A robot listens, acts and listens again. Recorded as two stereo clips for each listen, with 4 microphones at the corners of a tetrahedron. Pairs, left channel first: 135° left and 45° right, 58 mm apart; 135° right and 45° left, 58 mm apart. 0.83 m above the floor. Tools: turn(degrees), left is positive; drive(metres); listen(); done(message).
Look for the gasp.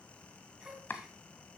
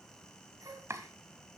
turn(degrees=35)
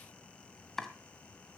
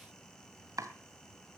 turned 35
done("Facing where the gasp came from. I can't hear it now.")